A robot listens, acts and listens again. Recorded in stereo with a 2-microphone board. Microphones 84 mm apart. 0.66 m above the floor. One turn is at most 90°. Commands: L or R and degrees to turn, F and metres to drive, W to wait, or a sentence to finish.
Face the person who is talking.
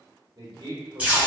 R45
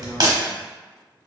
W
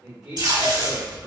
R10
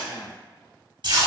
W
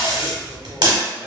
W
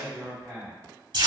Facing the man speaking.